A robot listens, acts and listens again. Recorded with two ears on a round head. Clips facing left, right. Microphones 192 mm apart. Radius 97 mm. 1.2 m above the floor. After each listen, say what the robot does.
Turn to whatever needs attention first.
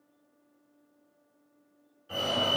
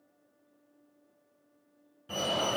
Turn 55° right.
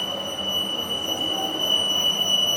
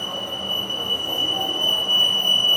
Turn 15° right.
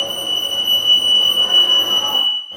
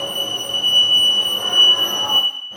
Found it: a fire alarm, straight ahead.